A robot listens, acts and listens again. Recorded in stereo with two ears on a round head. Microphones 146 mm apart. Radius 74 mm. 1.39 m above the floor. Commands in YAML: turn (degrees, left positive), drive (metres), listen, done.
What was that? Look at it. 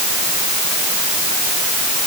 listen: true
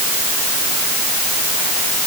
listen: true
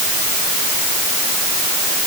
done: "I can't make out anything."